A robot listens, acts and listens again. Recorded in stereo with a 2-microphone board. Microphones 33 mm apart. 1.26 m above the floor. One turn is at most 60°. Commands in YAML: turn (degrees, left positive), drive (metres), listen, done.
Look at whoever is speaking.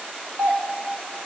listen: true
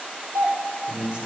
turn: -30
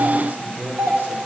turn: -60
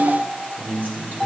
turn: -55
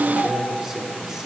turn: -10
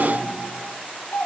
listen: true
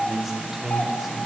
done: "Facing the man speaking, over 4 m away."